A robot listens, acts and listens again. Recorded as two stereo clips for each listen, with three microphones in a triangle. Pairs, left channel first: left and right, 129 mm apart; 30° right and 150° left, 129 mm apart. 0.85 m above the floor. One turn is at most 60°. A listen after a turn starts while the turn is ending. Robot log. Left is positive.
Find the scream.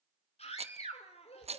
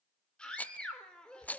note: The scream: 55° left.
cmd yaw +55
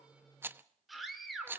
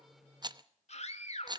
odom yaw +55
end: Found it: a scream, straight ahead, 2 to 4 m away.